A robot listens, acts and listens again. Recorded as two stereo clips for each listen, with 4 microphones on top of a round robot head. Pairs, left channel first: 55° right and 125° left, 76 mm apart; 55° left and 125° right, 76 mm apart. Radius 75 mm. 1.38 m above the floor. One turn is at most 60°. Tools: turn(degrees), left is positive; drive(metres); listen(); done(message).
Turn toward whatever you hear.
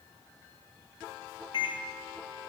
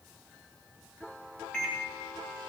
turn(degrees=-25)
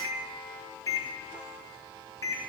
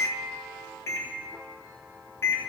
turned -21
done("Facing the microwave, 1 to 2 m away.")